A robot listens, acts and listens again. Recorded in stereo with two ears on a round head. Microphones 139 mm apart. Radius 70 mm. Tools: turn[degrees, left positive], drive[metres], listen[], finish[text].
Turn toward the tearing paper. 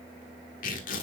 Thought: The tearing paper: about 60° left or 120° left.
Action: turn[60]
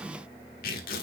Thought: So it is at 60° left.
Action: turn[60]
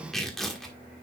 Action: finish[Facing the tearing paper, 1 to 2 m away.]